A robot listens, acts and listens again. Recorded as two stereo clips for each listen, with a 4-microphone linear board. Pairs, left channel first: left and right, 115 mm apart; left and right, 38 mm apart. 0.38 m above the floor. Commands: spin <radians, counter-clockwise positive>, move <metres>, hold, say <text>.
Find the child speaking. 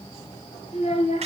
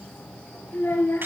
spin 1.31
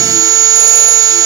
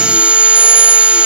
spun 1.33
hold
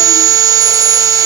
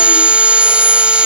hold
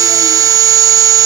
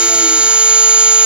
say I heard a child speaking, but can't make it out now. It was about 5° right or 30° left.